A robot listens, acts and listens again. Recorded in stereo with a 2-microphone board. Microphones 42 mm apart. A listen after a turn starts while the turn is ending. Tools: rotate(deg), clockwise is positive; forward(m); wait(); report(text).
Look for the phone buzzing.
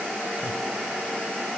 wait()
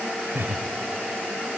wait()
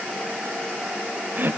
report("I can't make out a phone buzzing to turn to.")